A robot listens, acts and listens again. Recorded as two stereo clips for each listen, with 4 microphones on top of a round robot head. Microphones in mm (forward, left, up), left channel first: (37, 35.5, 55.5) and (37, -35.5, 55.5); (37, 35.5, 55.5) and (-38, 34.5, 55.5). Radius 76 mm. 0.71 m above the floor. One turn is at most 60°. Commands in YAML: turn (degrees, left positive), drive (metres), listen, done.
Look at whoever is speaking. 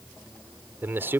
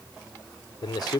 turn: -30
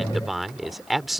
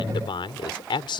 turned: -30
done: "Facing the man speaking."